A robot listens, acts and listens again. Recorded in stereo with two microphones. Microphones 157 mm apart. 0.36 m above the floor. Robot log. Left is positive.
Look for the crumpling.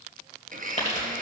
note: The crumpling: about 45° left or 135° left.
cmd yaw +45
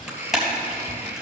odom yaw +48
end: Found it: crumpling, straight ahead.